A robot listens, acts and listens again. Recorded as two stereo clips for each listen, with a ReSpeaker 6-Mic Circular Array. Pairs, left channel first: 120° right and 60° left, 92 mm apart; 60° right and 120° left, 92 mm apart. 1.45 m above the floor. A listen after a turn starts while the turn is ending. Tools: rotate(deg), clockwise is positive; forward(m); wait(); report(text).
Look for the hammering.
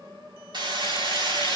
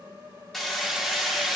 rotate(-25)
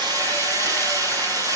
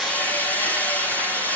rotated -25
rotate(-10)
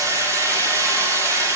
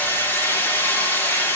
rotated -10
report("Found it: hammering, straight ahead.")